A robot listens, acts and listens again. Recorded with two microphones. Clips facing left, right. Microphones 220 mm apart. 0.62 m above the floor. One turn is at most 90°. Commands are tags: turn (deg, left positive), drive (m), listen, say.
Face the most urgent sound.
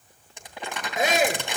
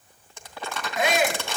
<turn deg="45"/>
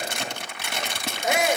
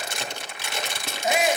<turn deg="85"/>
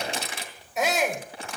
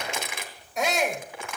<say>Found it: a shout, straight ahead, 2 to 4 m away.</say>